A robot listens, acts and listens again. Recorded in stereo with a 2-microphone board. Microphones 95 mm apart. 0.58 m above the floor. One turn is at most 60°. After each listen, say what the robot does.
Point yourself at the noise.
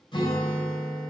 Turn 55° left.
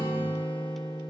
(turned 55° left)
Turn 60° left.
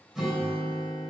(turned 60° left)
Found it: a guitar, straight ahead, 2 to 4 m away.